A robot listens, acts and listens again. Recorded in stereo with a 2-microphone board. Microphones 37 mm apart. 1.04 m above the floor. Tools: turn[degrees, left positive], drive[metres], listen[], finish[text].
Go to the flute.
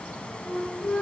Thought: The flute: about 35° left or 145° left.
Action: turn[35]
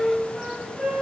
Action: drive[1.0]
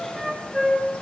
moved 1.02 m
Action: drive[1.0]
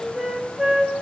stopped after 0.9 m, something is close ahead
Thought: The flute is now 10° right.
Action: turn[-10]
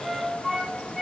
Action: finish[Arrived at the flute, straight ahead.]